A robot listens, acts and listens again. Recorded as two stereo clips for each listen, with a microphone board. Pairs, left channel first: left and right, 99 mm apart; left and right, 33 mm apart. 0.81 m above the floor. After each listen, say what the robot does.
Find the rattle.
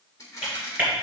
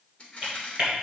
Turn 35° left.
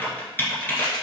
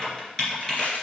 Keep listening.
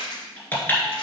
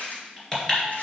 Turn 105° left.
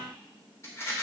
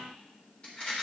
Turn 30° left.
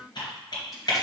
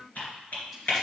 Keep listening.
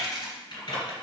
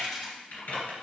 Keep listening.
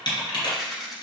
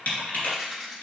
Found it: a rattle, straight ahead.